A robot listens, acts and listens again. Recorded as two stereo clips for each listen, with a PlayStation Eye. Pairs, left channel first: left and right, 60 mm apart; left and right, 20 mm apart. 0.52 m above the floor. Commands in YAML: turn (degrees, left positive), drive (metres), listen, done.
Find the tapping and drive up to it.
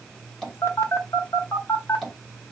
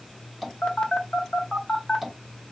turn: 30
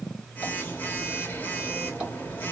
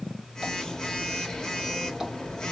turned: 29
listen: true
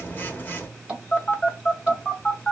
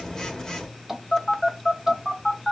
turn: -25
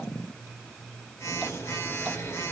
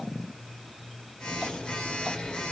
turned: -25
listen: true
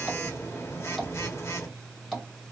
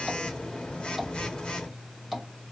drive: 1.0
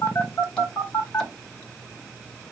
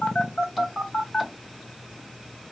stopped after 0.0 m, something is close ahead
listen: true
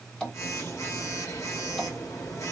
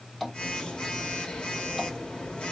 turn: 15
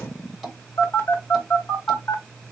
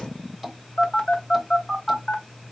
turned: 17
done: "Blocked. The tapping is further on, straight ahead."